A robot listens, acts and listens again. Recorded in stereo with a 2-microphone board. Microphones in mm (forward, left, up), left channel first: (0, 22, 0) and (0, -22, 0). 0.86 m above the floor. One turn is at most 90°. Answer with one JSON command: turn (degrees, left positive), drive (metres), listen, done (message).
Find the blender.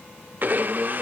{"turn": -50}
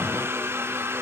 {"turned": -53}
{"turn": -75}
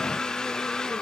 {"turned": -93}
{"turn": 15}
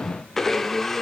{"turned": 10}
{"turn": 10}
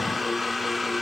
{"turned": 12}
{"done": "Found it: a blender, straight ahead."}